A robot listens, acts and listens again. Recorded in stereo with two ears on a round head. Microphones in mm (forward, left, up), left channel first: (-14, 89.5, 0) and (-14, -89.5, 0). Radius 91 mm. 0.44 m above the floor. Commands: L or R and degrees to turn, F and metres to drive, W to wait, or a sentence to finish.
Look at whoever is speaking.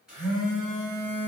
W
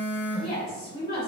L30
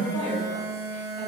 W
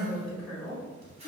Facing the woman speaking.